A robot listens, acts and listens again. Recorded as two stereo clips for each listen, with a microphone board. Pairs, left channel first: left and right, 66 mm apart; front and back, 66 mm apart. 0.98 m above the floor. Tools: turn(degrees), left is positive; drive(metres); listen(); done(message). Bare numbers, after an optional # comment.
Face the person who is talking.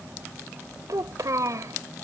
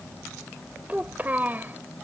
# The child speaking: 120° right.
turn(-120)
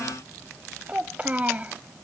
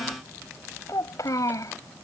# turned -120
# The child speaking is now 25° right.
turn(-25)
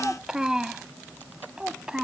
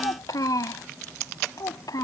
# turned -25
# The child speaking is now 15° right.
turn(-15)
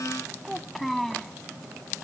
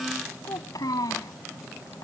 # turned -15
done("Facing the child speaking.")